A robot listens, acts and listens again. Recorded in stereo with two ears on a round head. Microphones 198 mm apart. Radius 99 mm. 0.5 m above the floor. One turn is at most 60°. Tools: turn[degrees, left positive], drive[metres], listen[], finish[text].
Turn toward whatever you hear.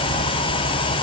Action: listen[]
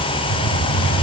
Action: turn[60]
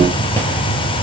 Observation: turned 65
Thought: So it is at 10° left.
Action: turn[10]
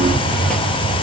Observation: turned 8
Action: finish[Found it: a hiss, straight ahead.]